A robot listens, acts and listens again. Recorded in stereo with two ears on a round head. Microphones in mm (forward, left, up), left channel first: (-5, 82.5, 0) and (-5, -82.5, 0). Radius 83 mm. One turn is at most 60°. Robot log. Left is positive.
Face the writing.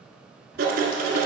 note: The writing: about 55° right or 125° right.
cmd yaw -55
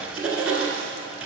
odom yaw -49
end: Facing the writing.